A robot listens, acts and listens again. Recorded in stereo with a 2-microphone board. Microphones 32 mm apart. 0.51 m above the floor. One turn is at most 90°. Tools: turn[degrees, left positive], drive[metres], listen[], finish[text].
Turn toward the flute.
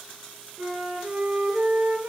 Thought: The flute: about 70° right or 110° right.
Action: turn[-70]
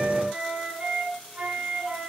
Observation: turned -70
Thought: So it is at 40° right.
Action: turn[-40]
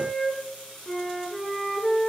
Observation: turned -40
Thought: The flute is now 10° left.
Action: turn[10]
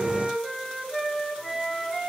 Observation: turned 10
Action: finish[Found it: a flute, straight ahead.]